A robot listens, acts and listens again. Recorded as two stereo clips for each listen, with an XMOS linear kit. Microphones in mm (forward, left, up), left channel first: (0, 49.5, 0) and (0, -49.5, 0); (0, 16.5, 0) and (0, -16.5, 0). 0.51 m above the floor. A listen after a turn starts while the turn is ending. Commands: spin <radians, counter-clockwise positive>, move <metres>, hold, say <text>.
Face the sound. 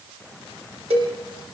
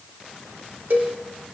spin -1.57
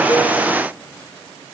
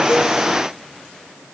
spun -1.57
hold
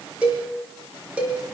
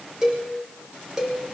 spin -0.26
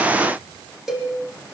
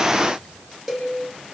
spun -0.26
say Facing the cowbell, over 4 m away.